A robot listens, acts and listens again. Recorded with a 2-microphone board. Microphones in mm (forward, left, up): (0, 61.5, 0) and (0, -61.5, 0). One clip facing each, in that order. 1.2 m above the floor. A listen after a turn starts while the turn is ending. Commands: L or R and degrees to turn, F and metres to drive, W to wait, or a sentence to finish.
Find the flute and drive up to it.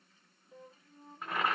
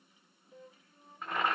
L35
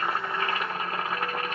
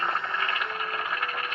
W
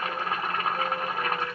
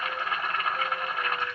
W
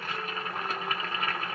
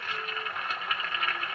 I heard a flute, but can't make it out now. It was about straight ahead or 110° left. I did not reach it.